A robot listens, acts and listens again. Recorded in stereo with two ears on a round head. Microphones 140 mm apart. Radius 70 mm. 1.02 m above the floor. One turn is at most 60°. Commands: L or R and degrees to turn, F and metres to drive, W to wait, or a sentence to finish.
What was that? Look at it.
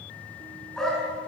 L30
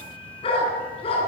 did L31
L60
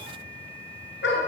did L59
L60
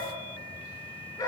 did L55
L20
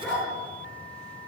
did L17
Found it: a dog barking, straight ahead.